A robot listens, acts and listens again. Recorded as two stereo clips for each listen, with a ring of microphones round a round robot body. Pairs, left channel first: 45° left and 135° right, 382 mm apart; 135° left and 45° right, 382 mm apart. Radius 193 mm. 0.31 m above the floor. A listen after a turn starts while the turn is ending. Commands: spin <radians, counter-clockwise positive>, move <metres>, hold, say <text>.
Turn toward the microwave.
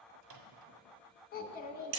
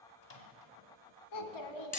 spin -3.05
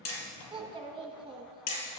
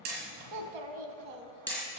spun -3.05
hold
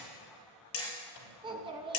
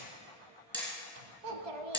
hold
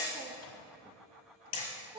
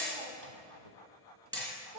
say I heard a microwave from this way, but can't make it out now.